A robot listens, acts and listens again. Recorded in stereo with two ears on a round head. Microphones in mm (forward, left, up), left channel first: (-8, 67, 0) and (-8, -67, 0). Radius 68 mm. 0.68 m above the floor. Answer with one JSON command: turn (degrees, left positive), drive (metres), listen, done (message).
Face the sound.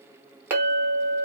{"turn": -15}
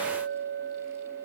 {"turn": -155}
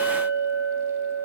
{"turn": 40}
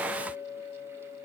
{"turn": -15}
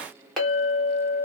{"done": "Found it: a clink, straight ahead, 1 to 2 m away."}